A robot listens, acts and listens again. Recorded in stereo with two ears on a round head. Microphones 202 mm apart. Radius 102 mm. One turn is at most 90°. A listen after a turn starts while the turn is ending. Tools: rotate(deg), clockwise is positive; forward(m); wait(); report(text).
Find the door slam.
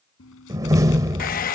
rotate(15)
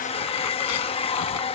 wait()
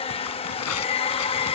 report("I heard a door slam, but can't make it out now. It was about straight ahead or 150° right.")